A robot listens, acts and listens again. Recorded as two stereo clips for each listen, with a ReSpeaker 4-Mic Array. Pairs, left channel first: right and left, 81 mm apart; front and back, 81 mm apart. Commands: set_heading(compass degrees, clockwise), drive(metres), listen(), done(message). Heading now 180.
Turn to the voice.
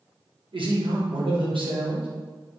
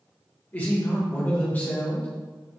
set_heading(105)
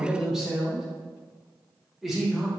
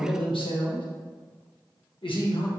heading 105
done("Facing the man speaking, 1 to 2 m away.")